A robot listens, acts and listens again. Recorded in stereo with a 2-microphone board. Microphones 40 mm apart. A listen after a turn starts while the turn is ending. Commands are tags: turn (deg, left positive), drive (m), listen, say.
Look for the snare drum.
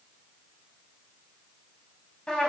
<listen/>
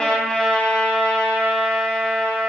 <listen/>
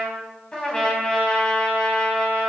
<say>I can't make out a snare drum, only a trumpet.</say>